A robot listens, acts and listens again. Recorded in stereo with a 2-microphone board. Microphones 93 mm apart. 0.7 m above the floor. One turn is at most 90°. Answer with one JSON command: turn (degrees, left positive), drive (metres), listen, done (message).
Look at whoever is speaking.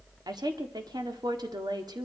{"turn": -45}
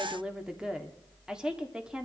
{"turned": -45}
{"turn": -10}
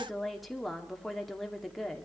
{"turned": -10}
{"done": "Facing the woman speaking, 1 to 2 m away."}